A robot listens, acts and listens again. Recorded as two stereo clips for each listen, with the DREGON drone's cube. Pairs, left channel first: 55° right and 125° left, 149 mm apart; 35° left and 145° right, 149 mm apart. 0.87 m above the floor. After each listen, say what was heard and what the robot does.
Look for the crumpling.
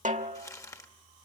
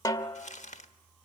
The crumpling: 10° left. Turn 10° left.
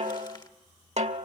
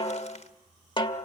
Keep listening.
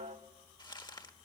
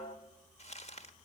Facing the crumpling, 1 to 2 m away.